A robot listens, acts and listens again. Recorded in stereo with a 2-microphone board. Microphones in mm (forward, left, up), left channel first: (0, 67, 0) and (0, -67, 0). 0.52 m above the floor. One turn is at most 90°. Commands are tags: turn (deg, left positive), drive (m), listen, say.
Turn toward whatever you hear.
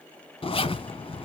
<turn deg="45"/>
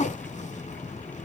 <turn deg="80"/>
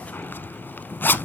<turn deg="15"/>
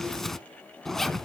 <say>Facing the zipper.</say>